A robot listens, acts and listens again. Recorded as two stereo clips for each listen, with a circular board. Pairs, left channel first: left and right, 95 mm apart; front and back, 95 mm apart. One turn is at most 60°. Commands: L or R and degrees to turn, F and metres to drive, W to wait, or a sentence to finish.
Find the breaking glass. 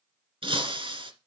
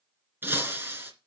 R60
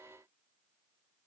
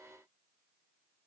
R55
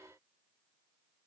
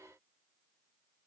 Facing where the breaking glass came from. I can't hear it now.